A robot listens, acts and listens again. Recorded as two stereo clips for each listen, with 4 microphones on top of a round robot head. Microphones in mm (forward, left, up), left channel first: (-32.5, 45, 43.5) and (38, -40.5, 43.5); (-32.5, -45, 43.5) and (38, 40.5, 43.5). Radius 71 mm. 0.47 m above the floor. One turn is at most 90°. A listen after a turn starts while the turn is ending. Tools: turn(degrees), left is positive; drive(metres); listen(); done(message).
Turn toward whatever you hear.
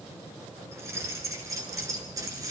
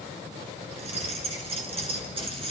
turn(degrees=10)
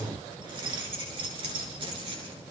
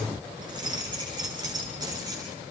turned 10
done("Found it: keys jangling, straight ahead.")